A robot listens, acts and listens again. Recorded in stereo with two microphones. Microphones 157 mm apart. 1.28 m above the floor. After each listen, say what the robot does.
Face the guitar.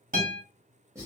Turn 65° right.
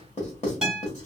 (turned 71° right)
Facing the guitar, 1 to 2 m away.